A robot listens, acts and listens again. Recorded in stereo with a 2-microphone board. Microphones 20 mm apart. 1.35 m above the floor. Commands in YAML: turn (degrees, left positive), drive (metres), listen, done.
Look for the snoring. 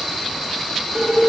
listen: true
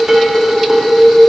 listen: true
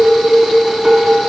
done: "I can't make out snoring, only dishes clattering."